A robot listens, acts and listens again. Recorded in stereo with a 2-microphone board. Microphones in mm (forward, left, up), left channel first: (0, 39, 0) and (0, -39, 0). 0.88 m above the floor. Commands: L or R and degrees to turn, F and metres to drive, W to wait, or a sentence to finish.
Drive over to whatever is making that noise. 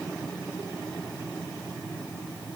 W
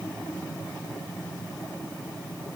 W
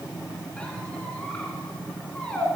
L30
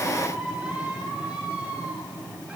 R15
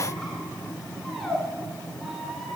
F1.0
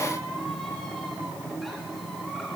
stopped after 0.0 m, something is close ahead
W
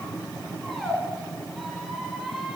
Blocked. The squeak is further on, straight ahead.